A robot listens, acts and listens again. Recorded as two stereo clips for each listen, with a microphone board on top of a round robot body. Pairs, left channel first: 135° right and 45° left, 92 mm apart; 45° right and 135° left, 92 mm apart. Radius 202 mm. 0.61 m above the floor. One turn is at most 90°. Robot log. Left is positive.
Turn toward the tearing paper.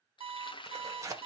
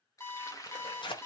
note: The tearing paper: 10° right.
cmd yaw -10
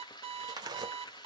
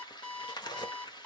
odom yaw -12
end: Facing the tearing paper, 1 to 2 m away.